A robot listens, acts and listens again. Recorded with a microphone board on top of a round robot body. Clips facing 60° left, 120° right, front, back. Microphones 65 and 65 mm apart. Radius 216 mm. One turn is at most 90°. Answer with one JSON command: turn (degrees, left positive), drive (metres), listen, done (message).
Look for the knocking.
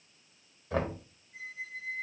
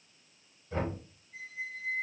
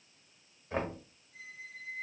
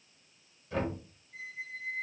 {"turn": 55}
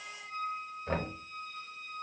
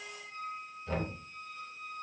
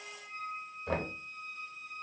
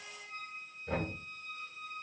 {"done": "Found it: knocking, straight ahead."}